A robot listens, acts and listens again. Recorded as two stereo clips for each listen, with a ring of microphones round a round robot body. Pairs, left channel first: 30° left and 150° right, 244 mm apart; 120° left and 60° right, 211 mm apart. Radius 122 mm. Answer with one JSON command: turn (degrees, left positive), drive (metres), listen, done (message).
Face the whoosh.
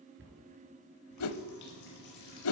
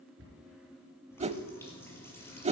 {"done": "Found it: a whoosh, straight ahead, under 1 m away."}